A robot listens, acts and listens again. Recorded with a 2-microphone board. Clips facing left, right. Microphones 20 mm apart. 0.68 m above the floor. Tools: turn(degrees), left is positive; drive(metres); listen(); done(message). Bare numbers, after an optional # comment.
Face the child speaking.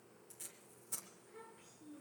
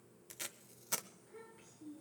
turn(30)
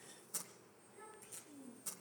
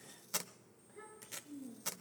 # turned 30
# So it is at 35° right.
turn(-35)
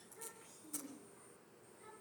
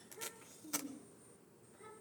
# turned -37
# The child speaking is now 10° right.
turn(-10)
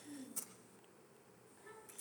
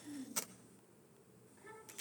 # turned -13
done("Facing the child speaking, over 4 m away.")